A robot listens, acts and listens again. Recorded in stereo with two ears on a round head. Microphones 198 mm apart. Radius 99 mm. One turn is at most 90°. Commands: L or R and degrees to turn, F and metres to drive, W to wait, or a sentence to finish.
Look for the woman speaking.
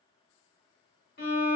W
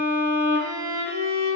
W
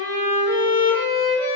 I can't make out a woman speaking, only a violin.